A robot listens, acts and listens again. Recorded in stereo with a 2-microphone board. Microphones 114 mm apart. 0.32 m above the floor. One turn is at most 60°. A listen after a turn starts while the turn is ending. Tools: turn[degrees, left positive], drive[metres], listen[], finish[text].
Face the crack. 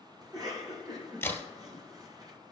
Thought: The crack: about 20° left or 160° left.
Action: turn[20]
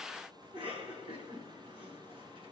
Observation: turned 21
Action: listen[]
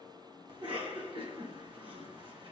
Action: finish[I heard a crack, but can't make it out now. It was about straight ahead or 140° left.]